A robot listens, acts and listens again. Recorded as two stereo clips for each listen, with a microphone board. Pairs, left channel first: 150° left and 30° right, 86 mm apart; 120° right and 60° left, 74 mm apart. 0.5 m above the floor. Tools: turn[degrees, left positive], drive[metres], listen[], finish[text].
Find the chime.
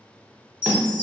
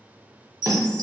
Thought: The chime: 85° left.
Action: turn[85]
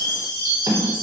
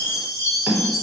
Thought: The chime is now 25° left.
Action: turn[25]
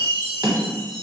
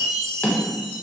Action: finish[Found it: a chime, straight ahead.]